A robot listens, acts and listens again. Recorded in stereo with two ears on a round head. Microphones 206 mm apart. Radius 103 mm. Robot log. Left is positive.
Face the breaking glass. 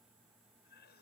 cmd idle
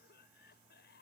cmd idle
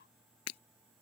note: The breaking glass: about 70° left or 110° left.
cmd yaw +70
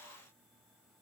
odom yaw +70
cmd idle
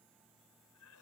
end: I heard breaking glass, but can't make it out now. It was about straight ahead or 40° left.